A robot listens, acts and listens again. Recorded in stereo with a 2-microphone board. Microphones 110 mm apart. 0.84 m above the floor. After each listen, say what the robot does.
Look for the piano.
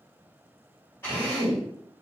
Keep listening.
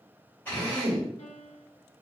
Turn 75° left.
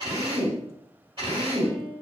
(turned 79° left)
Turn 25° left.
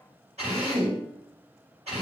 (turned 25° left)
Keep listening.
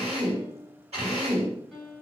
Facing the piano.